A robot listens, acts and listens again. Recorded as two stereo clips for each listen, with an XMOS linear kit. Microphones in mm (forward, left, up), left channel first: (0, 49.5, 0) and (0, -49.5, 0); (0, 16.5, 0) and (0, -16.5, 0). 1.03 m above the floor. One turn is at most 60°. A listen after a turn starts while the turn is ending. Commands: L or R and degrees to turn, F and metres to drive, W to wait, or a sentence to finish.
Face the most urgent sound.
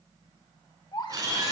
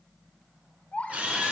L50
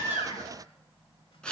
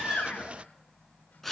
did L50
W
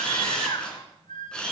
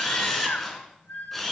L60
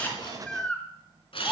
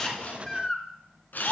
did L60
L10
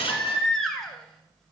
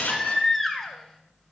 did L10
Found it: a baby crying, straight ahead.